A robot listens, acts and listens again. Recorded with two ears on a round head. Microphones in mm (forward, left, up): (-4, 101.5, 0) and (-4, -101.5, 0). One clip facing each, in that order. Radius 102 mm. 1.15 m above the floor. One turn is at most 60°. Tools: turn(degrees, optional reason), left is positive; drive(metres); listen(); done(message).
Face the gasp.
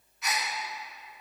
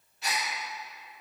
turn(degrees=-30, reason="The gasp: about 30° right or 150° right.")
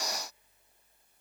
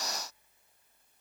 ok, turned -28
listen()
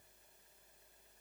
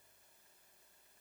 done("I heard a gasp, but can't make it out now. It was about straight ahead or 125° right.")